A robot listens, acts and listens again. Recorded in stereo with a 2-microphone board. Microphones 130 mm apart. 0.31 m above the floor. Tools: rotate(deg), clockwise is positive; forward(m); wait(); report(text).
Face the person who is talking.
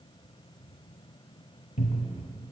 wait()
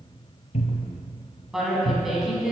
rotate(30)
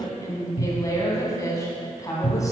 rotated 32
rotate(-30)
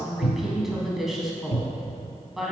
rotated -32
report("Found it: a woman speaking, straight ahead, 2 to 4 m away.")